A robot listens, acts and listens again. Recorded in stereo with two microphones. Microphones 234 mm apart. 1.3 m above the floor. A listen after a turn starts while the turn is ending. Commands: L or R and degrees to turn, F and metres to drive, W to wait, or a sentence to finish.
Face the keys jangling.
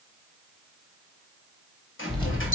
L20
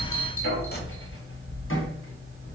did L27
L130
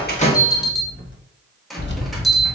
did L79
L55
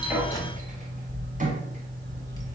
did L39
L15
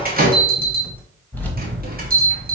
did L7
L10
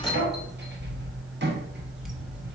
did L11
Facing the keys jangling, 1 to 2 m away.